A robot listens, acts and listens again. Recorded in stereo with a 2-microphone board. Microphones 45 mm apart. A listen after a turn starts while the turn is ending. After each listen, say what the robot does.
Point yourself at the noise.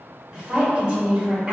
Turn 25° right.
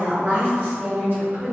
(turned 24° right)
Turn 125° right.
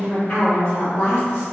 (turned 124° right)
Turn 55° left.
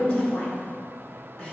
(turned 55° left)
Keep listening.
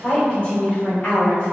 Turn 20° left.
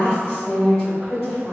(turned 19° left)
Found it: a woman speaking, straight ahead.